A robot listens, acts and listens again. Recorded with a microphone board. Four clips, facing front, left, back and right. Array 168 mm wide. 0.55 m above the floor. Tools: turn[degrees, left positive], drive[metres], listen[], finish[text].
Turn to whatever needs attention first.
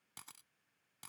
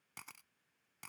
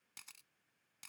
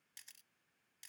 Action: listen[]
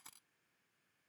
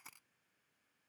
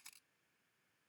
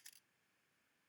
Action: listen[]
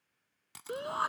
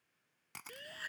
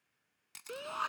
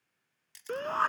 Thought: The shout: 70° right.
Action: turn[-70]
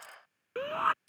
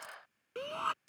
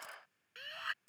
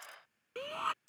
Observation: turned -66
Action: finish[Facing the shout.]